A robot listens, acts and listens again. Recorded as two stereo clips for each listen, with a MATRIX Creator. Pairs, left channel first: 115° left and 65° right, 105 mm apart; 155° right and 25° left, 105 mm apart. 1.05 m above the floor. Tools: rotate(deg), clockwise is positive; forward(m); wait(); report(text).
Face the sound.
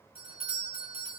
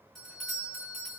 rotate(70)
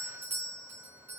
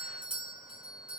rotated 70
report("Found it: a doorbell, straight ahead.")